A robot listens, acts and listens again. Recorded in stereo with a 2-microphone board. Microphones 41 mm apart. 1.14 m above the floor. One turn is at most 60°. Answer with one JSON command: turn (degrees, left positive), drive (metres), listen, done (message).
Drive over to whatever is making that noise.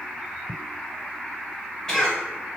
{"turn": 15}
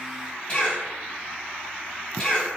{"turn": 60}
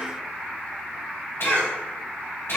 {"turn": 60}
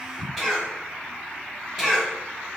{"turn": -10}
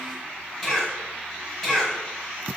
{"drive": 1.0}
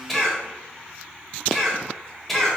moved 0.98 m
{"drive": 1.0}
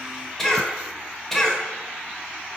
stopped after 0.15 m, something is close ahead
{"done": "I am next to the cough."}